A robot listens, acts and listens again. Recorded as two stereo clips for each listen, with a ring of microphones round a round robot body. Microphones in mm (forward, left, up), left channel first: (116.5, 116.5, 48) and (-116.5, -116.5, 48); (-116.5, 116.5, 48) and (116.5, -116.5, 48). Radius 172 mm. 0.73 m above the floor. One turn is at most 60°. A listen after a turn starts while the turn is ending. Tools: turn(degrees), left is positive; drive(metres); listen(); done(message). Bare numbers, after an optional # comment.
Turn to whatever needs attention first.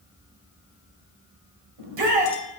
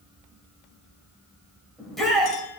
# The shout: 135° right.
turn(-60)
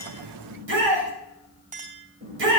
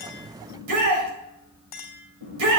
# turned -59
# The shout is now 80° right.
turn(-60)
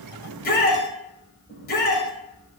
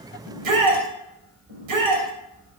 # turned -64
# The shout is now 15° right.
turn(-15)
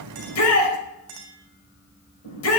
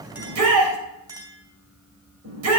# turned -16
done("Facing the shout, over 4 m away.")